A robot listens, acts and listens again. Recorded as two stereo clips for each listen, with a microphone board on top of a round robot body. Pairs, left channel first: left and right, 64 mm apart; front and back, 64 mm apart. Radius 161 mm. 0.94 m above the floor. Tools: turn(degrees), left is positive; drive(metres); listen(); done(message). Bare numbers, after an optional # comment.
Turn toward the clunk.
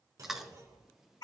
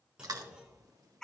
# The clunk: 105° right.
turn(-105)
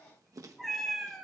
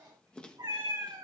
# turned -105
done("Facing where the clunk came from. I can't hear it now.")